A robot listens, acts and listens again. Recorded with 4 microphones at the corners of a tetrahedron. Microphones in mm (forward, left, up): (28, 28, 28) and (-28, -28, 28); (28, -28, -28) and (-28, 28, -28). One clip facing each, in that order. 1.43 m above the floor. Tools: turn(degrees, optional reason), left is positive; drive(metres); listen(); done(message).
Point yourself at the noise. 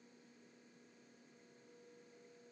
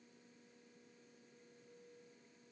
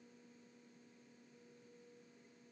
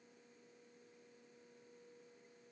listen()
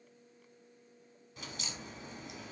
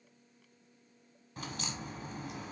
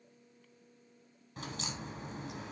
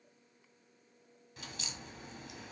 turn(degrees=-90, reason="The crack: 90° right.")
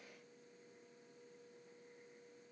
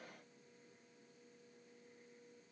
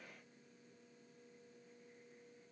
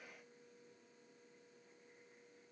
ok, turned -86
done("Facing where the crack came from. I can't hear it now.")